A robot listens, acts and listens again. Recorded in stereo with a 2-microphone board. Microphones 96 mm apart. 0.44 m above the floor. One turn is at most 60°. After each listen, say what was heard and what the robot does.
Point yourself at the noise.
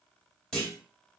Turn 30° left.
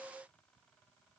Keep listening.
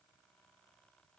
I heard a clunk, but can't make it out now. It was about 20° right or 140° left.